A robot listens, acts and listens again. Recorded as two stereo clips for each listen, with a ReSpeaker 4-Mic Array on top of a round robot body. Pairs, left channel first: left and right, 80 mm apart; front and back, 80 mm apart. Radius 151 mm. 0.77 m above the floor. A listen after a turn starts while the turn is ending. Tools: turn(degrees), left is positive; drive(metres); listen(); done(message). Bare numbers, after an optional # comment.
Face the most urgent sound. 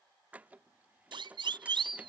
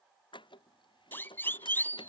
# The siren: 65° right.
turn(-65)
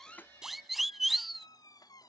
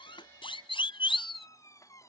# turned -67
done("Found it: a siren, straight ahead.")